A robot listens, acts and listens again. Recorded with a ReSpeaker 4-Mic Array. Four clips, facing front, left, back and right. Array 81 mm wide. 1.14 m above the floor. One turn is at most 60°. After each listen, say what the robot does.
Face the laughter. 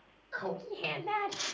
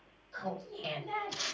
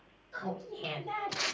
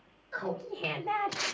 Turn 60° right.
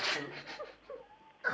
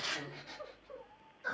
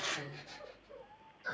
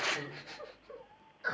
Turn 25° right.
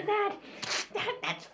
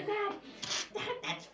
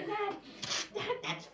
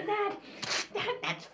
Turn 40° right.
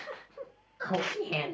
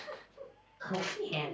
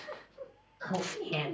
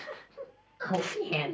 Turn 40° right.
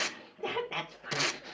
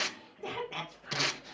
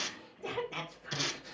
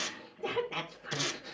Facing the laughter.